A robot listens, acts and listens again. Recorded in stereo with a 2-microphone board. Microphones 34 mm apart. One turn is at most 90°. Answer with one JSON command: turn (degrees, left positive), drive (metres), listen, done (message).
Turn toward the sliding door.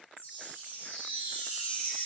{"listen": true}
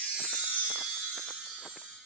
{"listen": true}
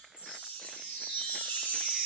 {"done": "I can't make out a sliding door to turn to."}